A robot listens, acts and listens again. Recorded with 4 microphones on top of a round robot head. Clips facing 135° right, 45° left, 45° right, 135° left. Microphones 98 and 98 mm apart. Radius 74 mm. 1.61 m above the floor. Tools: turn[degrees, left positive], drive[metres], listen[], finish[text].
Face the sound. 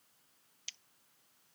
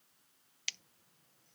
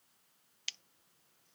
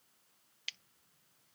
Thought: The scissors: 15° left.
Action: turn[15]
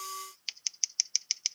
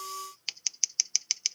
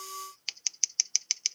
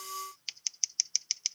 Action: finish[Found it: scissors, straight ahead.]